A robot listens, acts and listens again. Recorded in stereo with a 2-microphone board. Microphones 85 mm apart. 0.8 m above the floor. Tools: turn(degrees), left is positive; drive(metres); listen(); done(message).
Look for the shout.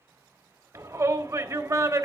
turn(degrees=-40)
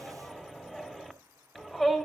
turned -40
done("Facing the shout.")